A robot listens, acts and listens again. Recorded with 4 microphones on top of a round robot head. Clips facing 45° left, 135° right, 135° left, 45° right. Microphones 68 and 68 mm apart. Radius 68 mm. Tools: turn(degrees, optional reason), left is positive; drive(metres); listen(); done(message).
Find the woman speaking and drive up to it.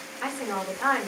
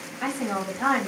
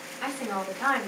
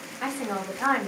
turn(degrees=-100, reason="The woman speaking: 100° right.")
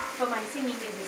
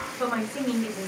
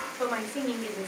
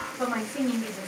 turn(degrees=25, reason="The woman speaking is now 25° left.")
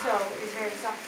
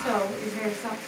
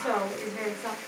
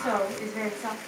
turn(degrees=-10, reason="The woman speaking is now 10° right.")
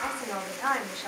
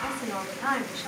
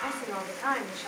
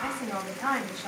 drive(metres=1.0)
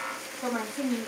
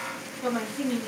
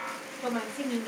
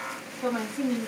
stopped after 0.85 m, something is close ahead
done("Arrived at the woman speaking, straight ahead.")